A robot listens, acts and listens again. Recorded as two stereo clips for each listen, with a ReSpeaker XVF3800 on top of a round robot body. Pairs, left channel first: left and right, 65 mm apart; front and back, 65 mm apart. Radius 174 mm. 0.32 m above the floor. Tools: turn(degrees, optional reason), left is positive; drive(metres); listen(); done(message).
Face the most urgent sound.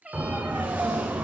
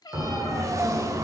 turn(degrees=-150, reason="The siren: 150° right.")
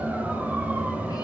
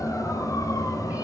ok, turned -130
turn(degrees=-20, reason="The siren is now 20° right.")
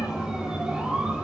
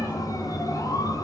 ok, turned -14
turn(degrees=-10, reason="The siren is now 10° right.")
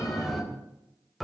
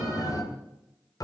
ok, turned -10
done("Facing the siren, 2 to 4 m away.")